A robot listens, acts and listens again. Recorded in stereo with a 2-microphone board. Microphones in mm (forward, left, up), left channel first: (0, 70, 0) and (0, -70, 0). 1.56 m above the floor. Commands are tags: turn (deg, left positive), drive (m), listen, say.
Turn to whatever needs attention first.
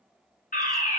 <turn deg="70"/>
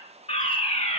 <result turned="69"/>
<turn deg="40"/>
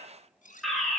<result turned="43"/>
<say>Facing the fire alarm.</say>